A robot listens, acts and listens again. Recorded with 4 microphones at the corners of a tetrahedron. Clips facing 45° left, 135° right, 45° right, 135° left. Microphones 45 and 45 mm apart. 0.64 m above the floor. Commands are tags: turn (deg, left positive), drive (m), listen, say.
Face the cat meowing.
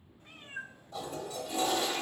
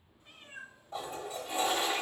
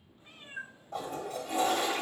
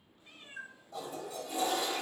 <turn deg="20"/>
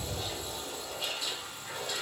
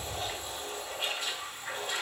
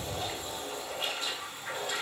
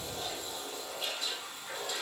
<listen/>
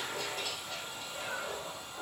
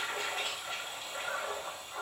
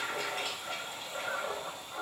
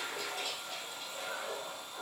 <listen/>
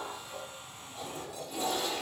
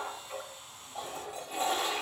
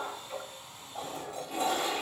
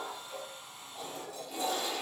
<say>I heard a cat meowing from this way, but can't make it out now.</say>